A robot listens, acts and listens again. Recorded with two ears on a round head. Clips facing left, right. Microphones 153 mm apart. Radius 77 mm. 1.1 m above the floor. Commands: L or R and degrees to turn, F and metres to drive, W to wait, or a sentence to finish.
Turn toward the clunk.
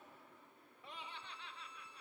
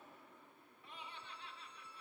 W
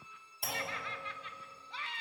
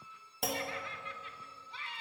R55
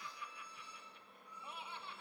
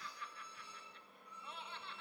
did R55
W
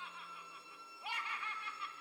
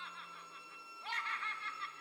I heard a clunk, but can't make it out now. It was about straight ahead or 70° right.